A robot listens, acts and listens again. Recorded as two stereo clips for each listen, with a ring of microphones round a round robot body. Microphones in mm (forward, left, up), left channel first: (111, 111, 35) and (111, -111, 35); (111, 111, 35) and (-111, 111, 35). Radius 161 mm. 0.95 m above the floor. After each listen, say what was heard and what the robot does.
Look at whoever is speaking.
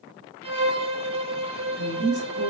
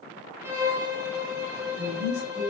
The woman speaking: 55° right. Turn 55° right.
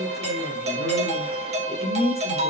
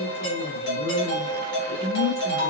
Found it: a woman speaking, straight ahead.